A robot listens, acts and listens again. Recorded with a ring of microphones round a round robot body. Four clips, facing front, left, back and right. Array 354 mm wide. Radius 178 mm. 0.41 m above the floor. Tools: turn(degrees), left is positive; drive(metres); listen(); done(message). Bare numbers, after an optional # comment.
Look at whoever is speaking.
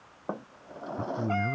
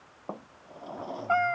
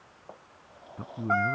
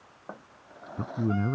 # The man speaking: 90° right.
turn(-90)
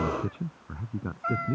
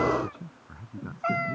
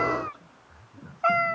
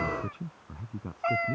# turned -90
# The man speaking is now 10° right.
turn(-10)
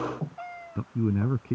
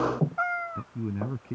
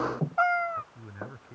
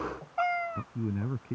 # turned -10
done("Facing the man speaking.")